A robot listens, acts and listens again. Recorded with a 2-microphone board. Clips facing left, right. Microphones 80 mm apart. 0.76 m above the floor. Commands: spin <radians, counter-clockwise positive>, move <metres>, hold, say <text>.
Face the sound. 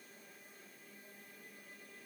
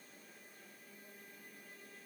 hold
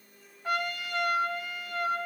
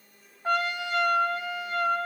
spin -0.52
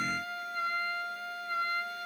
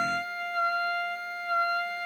spin -2.09
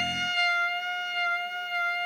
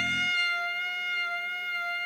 spin 0.26
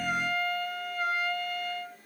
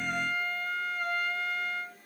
say Facing the trumpet.